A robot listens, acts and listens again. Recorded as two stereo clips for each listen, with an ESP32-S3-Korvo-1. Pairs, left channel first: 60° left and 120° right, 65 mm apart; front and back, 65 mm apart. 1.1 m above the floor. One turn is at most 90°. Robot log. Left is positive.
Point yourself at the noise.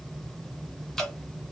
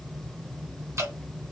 note: The dripping: 140° left.
cmd yaw +90
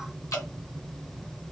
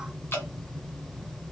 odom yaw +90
note: The dripping is now 50° left.
cmd yaw +50
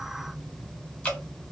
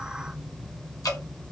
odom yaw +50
note: The dripping is now 10° right.
cmd yaw -10
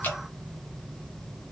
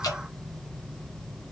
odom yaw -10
end: Facing the dripping, 1 to 2 m away.